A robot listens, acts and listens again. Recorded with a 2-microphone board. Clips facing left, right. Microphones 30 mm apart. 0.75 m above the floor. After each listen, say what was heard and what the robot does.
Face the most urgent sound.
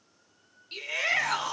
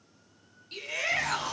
The shout: about 15° left or 165° left. Turn 15° left.
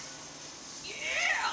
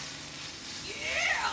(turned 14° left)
Facing the shout, 2 to 4 m away.